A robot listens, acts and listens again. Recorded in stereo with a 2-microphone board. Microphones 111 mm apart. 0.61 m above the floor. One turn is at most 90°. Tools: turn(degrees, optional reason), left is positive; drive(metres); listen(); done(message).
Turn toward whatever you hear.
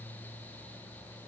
listen()
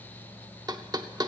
turn(degrees=-40, reason="The knocking: about 40° right or 140° right.")
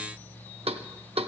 turn(degrees=-90, reason="So it is at 95° right.")
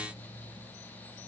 listen()
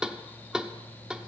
done("Found it: knocking, straight ahead, under 1 m away.")